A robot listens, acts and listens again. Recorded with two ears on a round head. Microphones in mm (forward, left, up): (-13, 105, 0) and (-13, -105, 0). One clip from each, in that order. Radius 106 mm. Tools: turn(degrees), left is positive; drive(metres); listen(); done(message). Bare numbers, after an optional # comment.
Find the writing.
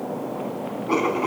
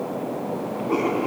# The writing: about 50° left or 130° left.
turn(50)
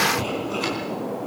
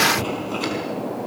done("Found it: writing, straight ahead.")